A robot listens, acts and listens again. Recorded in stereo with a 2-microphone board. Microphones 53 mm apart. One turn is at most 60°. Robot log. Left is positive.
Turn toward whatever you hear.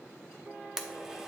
cmd yaw -30
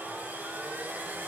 note: So it is at 140° right.
cmd yaw -60
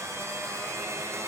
note: The blender is now 75° right.
cmd yaw -60
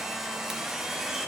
note: The blender is now 10° right.
cmd yaw -10
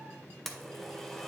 end: Found it: a blender, straight ahead, under 1 m away.